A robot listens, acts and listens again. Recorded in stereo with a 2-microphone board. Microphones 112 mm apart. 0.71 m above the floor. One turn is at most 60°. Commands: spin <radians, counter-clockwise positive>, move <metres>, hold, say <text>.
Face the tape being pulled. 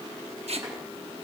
spin -1.05
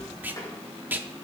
spin -0.26
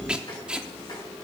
spin -0.17
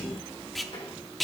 say Found it: tape being pulled, straight ahead, under 1 m away.